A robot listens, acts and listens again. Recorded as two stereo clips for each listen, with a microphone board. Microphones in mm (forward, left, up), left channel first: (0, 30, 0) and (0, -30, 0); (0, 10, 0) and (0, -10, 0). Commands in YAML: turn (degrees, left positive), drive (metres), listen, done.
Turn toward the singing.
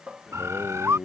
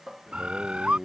turn: 30
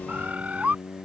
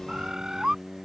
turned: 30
turn: 145
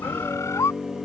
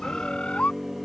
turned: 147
done: "Found it: singing, straight ahead."